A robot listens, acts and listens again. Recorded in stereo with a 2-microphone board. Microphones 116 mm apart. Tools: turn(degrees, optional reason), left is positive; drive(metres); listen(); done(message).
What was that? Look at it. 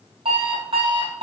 turn(degrees=-60, reason="The alarm clock: about 60° right or 120° right.")
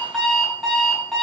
done("Found it: an alarm clock, straight ahead, 2 to 4 m away.")